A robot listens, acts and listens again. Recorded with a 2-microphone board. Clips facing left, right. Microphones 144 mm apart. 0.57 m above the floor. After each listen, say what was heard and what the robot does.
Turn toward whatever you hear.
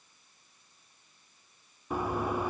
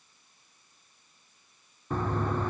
Turn 30° left.
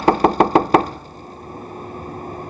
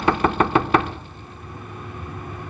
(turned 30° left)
So it is at 135° left. Turn 135° left.
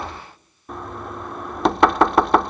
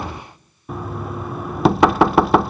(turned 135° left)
Facing the knocking.